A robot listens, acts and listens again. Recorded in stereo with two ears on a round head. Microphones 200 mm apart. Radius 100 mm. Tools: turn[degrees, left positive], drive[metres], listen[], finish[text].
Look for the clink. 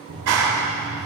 Action: listen[]
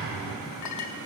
Action: turn[90]
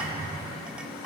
Action: listen[]
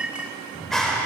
Action: finish[Facing the clink.]